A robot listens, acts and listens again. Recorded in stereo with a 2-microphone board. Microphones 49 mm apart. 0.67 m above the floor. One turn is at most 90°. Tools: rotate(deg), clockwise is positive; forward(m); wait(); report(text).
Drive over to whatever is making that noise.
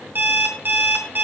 rotate(40)
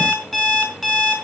forward(1.0)
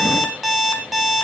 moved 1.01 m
forward(1.0)
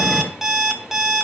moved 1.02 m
rotate(10)
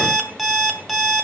forward(1.0)
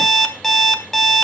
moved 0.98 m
forward(1.0)
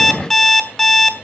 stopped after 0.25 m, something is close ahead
report("I am next to the alarm clock.")